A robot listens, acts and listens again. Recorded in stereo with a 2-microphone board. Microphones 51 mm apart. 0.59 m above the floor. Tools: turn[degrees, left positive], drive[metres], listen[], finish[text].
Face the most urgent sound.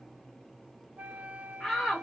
Action: turn[30]
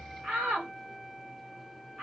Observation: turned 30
Thought: So it is at 25° right.
Action: turn[-25]
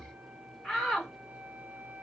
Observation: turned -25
Action: finish[Facing the shout.]